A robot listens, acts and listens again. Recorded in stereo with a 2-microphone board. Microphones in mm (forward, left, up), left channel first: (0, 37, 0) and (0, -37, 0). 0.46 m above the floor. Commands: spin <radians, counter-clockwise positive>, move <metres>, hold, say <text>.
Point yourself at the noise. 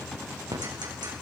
spin -1.57
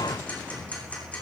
hold
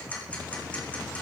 spin 0.35
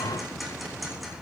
hold
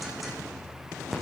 say Facing the ticking, over 4 m away.